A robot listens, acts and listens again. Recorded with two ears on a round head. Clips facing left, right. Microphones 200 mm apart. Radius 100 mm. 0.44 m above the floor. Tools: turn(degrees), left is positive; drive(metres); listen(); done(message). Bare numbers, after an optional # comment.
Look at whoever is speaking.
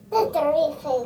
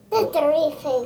# The child speaking: about 35° right or 145° right.
turn(-35)
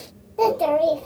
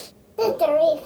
# So it is at 10° right.
turn(-10)
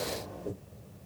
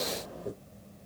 done("Found it: a child speaking, straight ahead, under 1 m away.")